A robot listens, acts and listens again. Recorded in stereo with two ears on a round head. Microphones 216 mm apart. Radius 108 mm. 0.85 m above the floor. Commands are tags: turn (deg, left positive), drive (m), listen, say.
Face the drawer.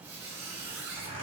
<listen/>
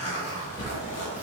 <turn deg="30"/>
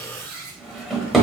<say>Facing the drawer, 1 to 2 m away.</say>